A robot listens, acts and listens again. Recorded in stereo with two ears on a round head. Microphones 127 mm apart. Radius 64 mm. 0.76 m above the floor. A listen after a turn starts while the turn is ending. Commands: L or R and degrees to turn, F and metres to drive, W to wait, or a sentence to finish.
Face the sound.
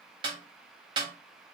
R35
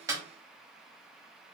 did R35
W
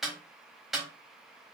Found it: a snare drum, straight ahead.